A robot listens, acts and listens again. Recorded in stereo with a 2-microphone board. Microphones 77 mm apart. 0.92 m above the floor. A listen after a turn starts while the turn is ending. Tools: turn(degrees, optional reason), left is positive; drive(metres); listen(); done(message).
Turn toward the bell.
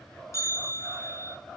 turn(degrees=40, reason="The bell: about 40° left or 140° left.")
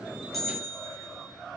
done("Facing the bell, over 4 m away.")